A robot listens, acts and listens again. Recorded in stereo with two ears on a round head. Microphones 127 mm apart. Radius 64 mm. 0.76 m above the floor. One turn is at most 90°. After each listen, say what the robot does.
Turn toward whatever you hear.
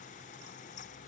Keep listening.
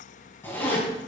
Turn 15° left.
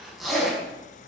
Facing the zipper, over 4 m away.